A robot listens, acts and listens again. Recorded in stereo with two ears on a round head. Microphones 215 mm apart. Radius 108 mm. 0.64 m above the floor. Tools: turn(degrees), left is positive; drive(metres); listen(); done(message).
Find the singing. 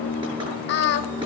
turn(degrees=45)
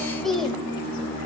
done("Facing the singing.")